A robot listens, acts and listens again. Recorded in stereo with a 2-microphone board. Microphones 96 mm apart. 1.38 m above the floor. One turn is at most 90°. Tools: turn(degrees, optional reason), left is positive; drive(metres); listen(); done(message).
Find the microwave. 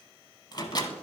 turn(degrees=45, reason="The microwave: about 45° left or 135° left.")
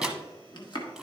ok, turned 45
done("Found it: a microwave, straight ahead.")